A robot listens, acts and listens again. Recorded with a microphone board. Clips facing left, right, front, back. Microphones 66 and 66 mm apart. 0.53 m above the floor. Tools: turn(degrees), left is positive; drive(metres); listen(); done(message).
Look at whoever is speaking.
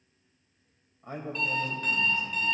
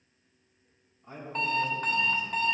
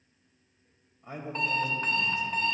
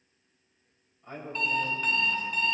turn(degrees=75)
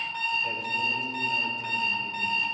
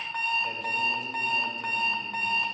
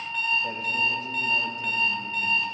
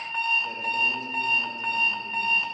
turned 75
listen()
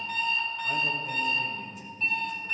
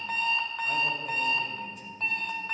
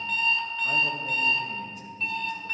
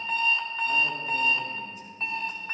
done("Facing the man speaking.")